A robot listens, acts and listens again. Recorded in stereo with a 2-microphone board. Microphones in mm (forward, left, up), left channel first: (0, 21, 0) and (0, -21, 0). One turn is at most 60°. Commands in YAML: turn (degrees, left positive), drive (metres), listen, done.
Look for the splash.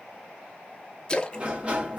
turn: 25
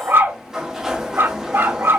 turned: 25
listen: true
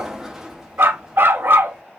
done: "I heard a splash, but can't make it out now. It was about straight ahead or 130° left."